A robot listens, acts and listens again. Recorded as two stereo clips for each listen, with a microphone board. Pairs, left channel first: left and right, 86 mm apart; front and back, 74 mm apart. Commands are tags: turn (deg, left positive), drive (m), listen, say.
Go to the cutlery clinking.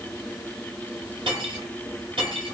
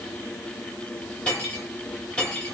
<turn deg="-80"/>
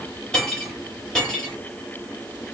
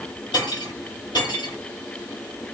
<drive m="1.0"/>
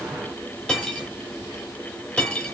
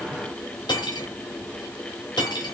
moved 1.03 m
<turn deg="10"/>
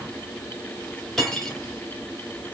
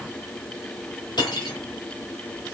<drive m="1.0"/>
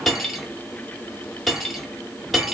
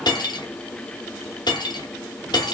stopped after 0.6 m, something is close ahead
<say>Arrived at the cutlery clinking, straight ahead.</say>